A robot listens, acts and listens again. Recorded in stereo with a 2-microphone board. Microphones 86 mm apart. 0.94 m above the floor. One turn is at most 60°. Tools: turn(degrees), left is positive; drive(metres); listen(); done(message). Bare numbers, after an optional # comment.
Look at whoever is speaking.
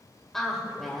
turn(30)
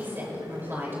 # So it is at 25° right.
turn(-25)
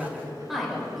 done("Facing the woman speaking.")